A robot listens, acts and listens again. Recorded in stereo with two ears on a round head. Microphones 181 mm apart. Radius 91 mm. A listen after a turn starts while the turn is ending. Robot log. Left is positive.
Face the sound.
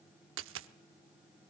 note: The dropped coin: about 70° right or 110° right.
cmd yaw -70
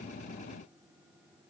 cmd idle
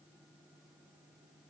end: I heard a dropped coin, but can't make it out now. It was about straight ahead or 40° right.